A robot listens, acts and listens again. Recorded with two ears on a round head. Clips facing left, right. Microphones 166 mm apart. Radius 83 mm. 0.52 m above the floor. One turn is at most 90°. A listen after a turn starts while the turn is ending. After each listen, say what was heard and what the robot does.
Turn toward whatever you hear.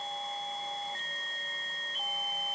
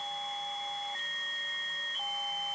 Keep listening.
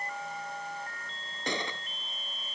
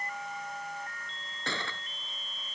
Turn 30° left.
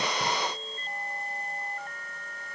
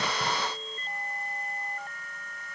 Keep listening.
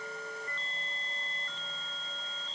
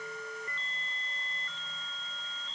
I heard a gunshot, but can't make it out now. It was about 15° right or 135° left.